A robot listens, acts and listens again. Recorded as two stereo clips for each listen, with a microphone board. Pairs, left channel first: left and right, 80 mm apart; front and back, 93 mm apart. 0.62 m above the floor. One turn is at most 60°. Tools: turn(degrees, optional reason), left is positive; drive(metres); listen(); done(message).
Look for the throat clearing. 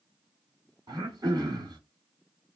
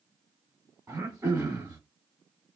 turn(degrees=-60, reason="The throat clearing: 120° right.")
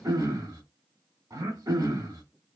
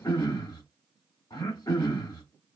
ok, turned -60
turn(degrees=-50, reason="The throat clearing is now 50° right.")
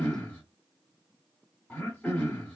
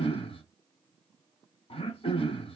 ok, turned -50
turn(degrees=15, reason="The throat clearing is now 15° left.")
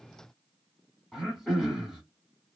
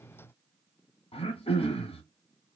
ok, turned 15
done("Found it: throat clearing, straight ahead, 1 to 2 m away.")